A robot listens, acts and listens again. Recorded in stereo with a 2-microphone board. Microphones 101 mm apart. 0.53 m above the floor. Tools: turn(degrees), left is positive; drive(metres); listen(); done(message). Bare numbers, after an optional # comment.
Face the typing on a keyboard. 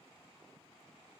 listen()
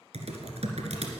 turn(-90)
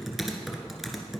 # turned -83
done("Facing the typing on a keyboard, 1 to 2 m away.")